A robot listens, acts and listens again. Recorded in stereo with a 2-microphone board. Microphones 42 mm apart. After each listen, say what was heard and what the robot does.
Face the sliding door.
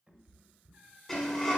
Turn 30° left.
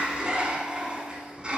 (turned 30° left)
So it is at 20° right. Turn 20° right.
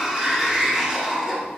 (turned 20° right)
Found it: a sliding door, straight ahead, 1 to 2 m away.